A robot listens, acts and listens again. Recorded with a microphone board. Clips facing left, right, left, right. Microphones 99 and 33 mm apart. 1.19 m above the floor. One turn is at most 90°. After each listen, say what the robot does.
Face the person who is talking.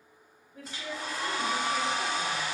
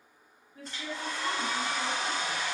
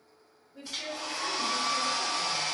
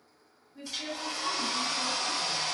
Turn 40° left.
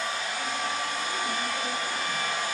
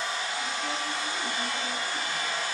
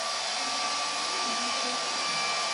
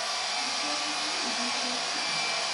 Keep listening.
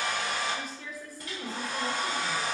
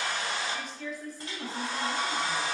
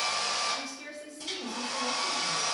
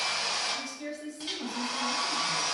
Facing the woman speaking.